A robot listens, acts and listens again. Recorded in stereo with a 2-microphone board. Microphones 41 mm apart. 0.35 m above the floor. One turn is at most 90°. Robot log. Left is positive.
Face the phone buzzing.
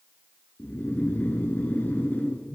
cmd yaw +90
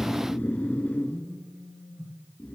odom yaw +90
note: So it is at 10° right.
cmd yaw -10
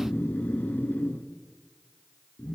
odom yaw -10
end: Facing the phone buzzing, 2 to 4 m away.